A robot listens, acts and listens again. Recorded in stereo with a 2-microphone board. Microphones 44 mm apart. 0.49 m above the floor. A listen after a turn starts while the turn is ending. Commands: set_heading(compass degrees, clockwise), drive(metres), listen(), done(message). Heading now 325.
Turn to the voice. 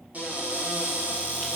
listen()
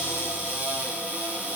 listen()
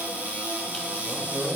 set_heading(350)
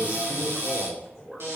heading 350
done("Facing the man speaking.")